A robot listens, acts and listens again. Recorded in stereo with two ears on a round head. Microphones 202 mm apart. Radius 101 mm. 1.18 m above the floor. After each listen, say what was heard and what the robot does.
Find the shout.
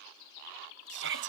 The shout: about 55° right or 125° right. Turn 55° right.
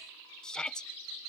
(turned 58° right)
Facing the shout.